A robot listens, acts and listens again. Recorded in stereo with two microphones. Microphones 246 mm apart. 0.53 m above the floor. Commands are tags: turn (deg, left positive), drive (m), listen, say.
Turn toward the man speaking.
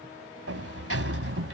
<listen/>
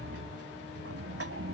<listen/>
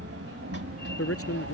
<turn deg="65"/>
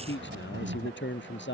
<turn deg="50"/>
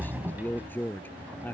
<say>Facing the man speaking.</say>